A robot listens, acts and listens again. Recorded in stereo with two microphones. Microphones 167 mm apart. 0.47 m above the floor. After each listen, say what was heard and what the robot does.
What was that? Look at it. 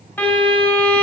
Turn 30° left.
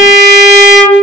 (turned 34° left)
So it is at 135° left. Turn 135° left.
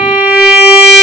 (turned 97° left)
The violin is now 40° left. Turn 40° left.
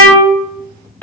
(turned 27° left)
The violin is now 10° left. Turn 10° left.
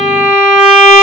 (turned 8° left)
Found it: a violin, straight ahead, 1 to 2 m away.